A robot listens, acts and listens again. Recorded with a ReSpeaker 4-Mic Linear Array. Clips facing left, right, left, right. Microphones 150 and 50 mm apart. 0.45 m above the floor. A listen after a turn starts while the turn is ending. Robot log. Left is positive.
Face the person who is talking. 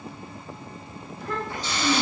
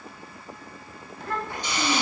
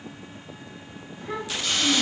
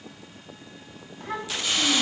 note: The child speaking: about 60° right or 120° right.
cmd yaw -60
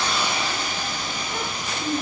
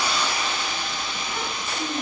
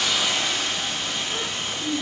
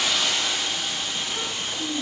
end: Found it: a child speaking, straight ahead.